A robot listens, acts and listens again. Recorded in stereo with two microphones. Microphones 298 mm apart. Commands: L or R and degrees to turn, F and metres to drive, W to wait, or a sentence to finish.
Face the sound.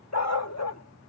L60
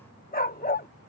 L35
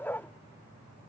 Found it: a dog barking, straight ahead.